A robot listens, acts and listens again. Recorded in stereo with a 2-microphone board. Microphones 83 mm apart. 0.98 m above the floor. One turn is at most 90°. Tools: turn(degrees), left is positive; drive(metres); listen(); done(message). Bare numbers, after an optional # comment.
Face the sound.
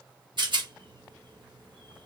# The rattle: about 65° right or 115° right.
turn(-65)
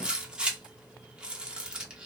# So it is at 10° right.
turn(-10)
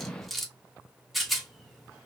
done("Found it: a rattle, straight ahead.")